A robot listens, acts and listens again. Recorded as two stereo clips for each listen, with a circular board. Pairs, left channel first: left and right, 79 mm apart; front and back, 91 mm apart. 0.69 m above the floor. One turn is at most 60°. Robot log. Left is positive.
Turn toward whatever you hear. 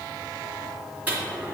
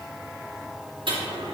note: The dropped coin: 160° right.
cmd yaw -60
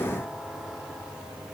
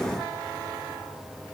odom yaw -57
note: Nothing new. It was at 105° right.
cmd yaw -60
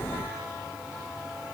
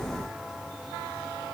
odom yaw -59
note: Nothing new. It was at 45° right.
cmd yaw -45
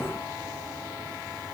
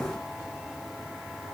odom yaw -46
end: I heard a dropped coin from this way, but can't make it out now.